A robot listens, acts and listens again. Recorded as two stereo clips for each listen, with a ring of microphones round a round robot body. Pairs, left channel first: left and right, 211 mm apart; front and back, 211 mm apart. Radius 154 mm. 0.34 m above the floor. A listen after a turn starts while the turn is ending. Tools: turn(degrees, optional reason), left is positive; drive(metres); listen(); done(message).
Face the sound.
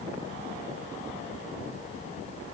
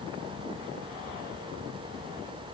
listen()
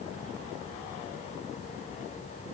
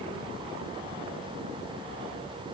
listen()
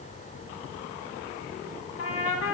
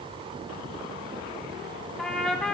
turn(degrees=85, reason="The trumpet: 85° left.")
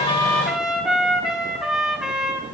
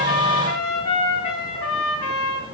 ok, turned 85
done("Facing the trumpet, 1 to 2 m away.")